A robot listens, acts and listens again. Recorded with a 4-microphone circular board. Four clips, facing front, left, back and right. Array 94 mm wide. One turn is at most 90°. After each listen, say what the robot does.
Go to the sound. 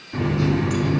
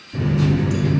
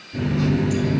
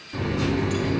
Turn 25° right.
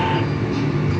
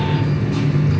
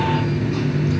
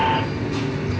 Drive 1.0 m forward.
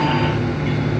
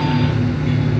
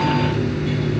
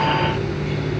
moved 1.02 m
Drive 1.0 m forward.
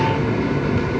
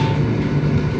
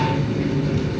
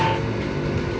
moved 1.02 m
Drive 1.0 m forward.
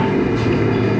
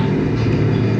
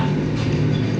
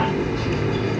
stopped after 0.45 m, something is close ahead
Arrived at the running tap, straight ahead.